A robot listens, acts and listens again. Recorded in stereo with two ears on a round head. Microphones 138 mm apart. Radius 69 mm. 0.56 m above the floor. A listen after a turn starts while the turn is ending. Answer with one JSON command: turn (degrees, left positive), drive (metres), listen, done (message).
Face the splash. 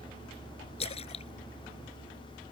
{"turn": 40}
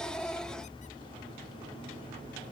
{"listen": true}
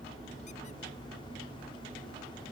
{"done": "I heard a splash, but can't make it out now. It was about straight ahead or 100° left."}